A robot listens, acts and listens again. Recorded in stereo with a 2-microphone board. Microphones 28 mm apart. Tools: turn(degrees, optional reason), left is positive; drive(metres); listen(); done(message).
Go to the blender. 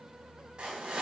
listen()
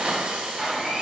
turn(degrees=-30)
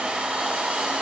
turn(degrees=-145, reason="So it is at 145° right.")
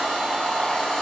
drive(metres=1.0)
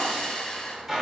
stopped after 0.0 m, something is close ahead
done("Blocked. The blender is further on, straight ahead.")